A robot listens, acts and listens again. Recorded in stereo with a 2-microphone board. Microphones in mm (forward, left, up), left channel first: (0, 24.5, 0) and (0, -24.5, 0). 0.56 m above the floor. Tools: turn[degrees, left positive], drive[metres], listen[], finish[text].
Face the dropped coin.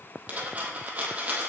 Thought: The dropped coin: about 30° right or 150° right.
Action: turn[-30]
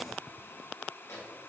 Action: listen[]
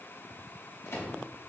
Action: finish[I heard a dropped coin, but can't make it out now. It was about straight ahead or 120° right.]